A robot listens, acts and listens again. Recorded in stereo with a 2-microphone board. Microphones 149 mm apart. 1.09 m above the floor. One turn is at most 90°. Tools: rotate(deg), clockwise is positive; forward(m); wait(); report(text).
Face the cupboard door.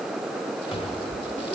rotate(-40)
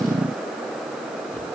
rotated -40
wait()
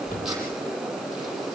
rotate(-90)
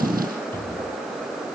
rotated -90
rotate(-15)
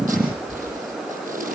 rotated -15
report("Found it: a cupboard door, straight ahead.")